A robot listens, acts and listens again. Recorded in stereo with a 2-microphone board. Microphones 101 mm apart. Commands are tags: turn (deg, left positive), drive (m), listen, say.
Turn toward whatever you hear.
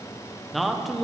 <turn deg="30"/>
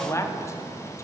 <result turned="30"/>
<turn deg="150"/>
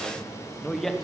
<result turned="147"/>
<say>Facing the man speaking.</say>